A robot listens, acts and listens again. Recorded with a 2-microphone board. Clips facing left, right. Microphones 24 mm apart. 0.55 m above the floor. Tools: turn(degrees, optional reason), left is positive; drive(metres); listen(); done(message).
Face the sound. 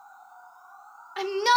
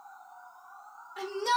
turn(degrees=50, reason="The shout: about 50° left or 130° left.")
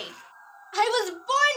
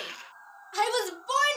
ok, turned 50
turn(degrees=15, reason="So it is at 15° left.")
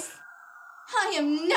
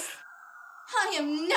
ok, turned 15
done("Found it: a shout, straight ahead.")